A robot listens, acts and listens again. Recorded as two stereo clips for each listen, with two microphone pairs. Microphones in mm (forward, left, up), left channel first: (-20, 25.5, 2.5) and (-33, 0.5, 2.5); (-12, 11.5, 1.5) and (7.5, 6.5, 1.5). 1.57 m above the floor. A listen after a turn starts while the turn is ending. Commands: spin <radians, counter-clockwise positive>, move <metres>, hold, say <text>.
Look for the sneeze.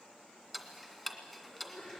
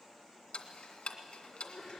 spin 1.83
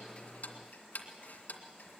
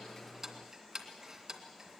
say Facing where the sneeze came from. I can't hear it now.